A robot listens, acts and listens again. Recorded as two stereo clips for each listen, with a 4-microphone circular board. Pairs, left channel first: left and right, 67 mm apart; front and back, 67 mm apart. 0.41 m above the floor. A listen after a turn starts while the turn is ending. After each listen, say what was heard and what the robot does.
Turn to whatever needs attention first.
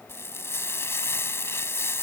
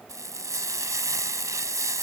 Keep listening.
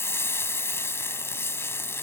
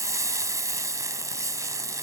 Keep listening.
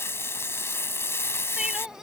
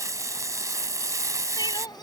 The crying: 10° right. Turn 10° right.
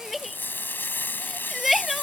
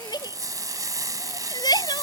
Found it: crying, straight ahead.